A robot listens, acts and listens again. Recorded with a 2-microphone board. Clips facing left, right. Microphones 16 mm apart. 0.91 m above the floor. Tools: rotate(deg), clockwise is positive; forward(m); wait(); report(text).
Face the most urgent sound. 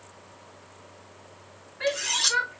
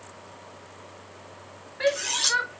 rotate(50)
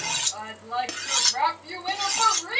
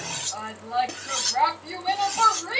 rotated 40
rotate(10)
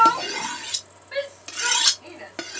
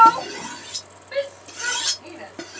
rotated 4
report("Facing the shout.")